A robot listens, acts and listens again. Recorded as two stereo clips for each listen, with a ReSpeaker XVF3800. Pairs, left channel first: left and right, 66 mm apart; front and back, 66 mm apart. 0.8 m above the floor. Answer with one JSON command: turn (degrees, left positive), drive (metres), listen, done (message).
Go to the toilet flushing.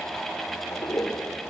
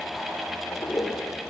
{"turn": 50}
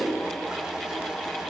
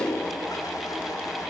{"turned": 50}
{"turn": -10}
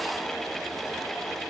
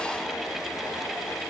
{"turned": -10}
{"listen": true}
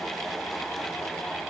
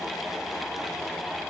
{"listen": true}
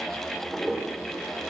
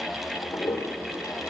{"drive": 1.0}
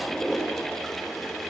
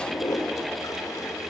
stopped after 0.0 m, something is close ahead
{"done": "Something is in my way. I am facing the toilet flushing but have not reached it."}